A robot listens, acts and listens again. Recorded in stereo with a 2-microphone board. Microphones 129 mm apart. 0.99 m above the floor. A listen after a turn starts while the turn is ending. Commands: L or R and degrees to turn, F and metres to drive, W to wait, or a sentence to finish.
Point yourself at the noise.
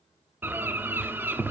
R15
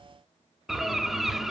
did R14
Found it: a bird, straight ahead.